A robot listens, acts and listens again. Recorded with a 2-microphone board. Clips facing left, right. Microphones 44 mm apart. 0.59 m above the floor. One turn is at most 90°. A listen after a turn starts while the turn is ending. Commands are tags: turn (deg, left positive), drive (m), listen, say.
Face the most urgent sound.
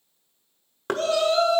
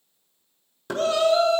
<turn deg="30"/>
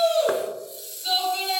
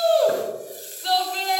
<turn deg="-30"/>
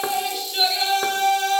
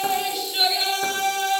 <turn deg="10"/>
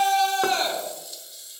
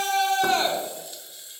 <say>Found it: a shout, straight ahead, over 4 m away.</say>